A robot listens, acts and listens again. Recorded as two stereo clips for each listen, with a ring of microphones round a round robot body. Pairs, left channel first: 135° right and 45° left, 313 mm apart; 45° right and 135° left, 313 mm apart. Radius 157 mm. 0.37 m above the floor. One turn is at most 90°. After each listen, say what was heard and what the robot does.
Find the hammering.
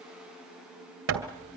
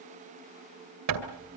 The hammering: 95° left. Turn 90° left.
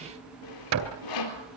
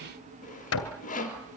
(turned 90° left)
Facing the hammering, 2 to 4 m away.